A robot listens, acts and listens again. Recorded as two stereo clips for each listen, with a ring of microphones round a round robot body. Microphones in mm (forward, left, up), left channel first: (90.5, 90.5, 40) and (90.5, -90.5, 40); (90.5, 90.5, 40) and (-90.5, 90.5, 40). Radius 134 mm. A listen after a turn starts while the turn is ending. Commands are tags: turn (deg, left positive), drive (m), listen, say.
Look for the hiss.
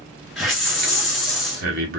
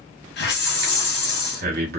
<say>Facing the hiss.</say>